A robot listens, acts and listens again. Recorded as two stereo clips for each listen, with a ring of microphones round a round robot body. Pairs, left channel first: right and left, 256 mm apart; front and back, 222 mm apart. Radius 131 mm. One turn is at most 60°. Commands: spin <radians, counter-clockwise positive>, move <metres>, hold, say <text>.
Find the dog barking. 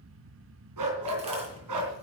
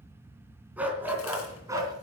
spin 1.05
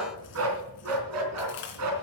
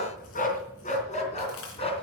spin 1.05
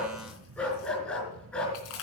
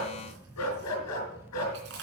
say Found it: a dog barking, straight ahead.